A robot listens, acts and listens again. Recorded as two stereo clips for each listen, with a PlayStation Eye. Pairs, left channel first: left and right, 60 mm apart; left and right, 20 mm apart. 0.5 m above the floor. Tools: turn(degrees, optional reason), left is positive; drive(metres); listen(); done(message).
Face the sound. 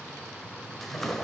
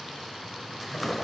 turn(degrees=30)
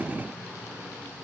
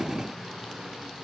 listen()
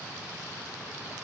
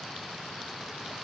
done("I heard a splash, but can't make it out now. It was about 25° right or 145° left.")